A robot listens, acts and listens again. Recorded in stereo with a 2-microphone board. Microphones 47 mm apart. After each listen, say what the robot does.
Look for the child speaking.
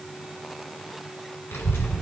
Turn 65° left.
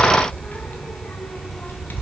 Turn 50° left.
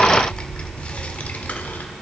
Turn 40° left.
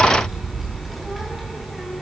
Facing the child speaking.